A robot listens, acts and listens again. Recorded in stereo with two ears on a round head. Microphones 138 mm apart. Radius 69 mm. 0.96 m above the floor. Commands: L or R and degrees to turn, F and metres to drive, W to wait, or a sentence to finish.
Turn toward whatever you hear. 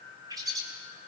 R25
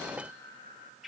Found it: a bird, straight ahead.